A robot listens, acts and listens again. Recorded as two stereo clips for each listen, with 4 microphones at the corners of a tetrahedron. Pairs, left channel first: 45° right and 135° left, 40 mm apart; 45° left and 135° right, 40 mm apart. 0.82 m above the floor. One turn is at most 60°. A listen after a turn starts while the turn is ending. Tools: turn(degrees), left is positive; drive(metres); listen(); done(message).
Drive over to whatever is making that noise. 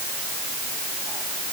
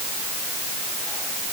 listen()
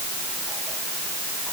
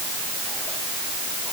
listen()
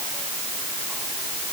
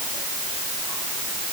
done("I can't make out anything.")